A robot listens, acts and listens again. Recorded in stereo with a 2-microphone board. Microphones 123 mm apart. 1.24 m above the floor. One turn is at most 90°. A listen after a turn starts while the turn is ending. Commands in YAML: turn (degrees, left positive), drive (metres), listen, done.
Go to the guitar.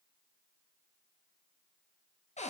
listen: true
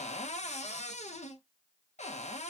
listen: true
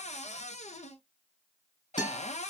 turn: 40
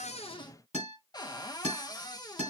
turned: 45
turn: 90
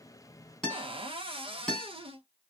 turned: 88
drive: 1.0
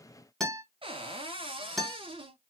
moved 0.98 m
drive: 1.0
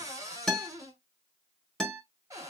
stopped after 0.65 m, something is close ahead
done: "Arrived at the guitar, straight ahead."